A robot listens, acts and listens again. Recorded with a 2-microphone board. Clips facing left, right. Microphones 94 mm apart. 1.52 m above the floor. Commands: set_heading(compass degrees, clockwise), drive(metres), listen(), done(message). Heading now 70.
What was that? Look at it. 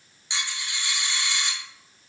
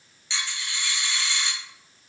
set_heading(50)
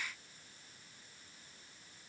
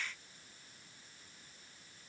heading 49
listen()
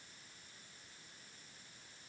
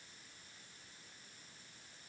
done("I heard a dropped coin, but can't make it out now. It was about straight ahead or 140° left.")